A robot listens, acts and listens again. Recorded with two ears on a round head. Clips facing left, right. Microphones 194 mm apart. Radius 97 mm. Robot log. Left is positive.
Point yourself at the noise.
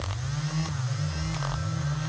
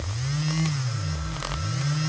cmd idle
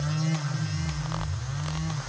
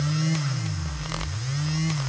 cmd idle
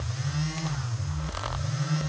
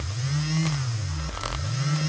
end: I can't make out anything to turn to.